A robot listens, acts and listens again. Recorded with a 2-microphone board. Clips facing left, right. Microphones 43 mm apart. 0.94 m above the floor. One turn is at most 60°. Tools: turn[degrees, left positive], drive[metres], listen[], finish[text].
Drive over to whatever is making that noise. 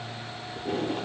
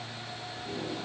Thought: The tape being pulled: about 50° left or 130° left.
Action: turn[50]
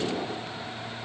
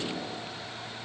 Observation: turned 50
Thought: So it is at 75° left.
Action: turn[60]
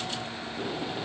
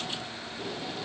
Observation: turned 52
Thought: The tape being pulled is now 25° left.
Action: turn[25]
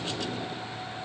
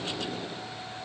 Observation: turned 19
Action: listen[]
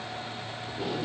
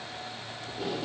Action: drive[1.0]
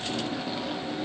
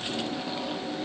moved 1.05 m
Action: drive[1.0]
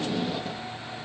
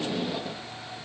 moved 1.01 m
Action: drive[1.0]
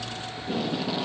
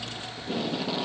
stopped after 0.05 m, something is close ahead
Action: finish[I am next to the tape being pulled.]